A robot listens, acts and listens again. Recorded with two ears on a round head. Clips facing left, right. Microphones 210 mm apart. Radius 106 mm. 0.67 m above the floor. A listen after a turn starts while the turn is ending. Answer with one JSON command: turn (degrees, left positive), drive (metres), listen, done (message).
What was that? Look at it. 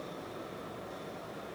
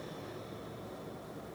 {"listen": true}
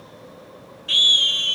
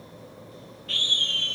{"turn": 60}
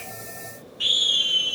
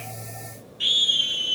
{"done": "Facing the scream, 2 to 4 m away."}